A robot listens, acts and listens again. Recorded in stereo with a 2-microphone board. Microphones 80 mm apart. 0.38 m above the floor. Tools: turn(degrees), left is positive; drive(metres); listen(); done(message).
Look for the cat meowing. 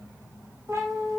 turn(degrees=-35)
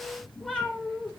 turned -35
done("Found it: a cat meowing, straight ahead.")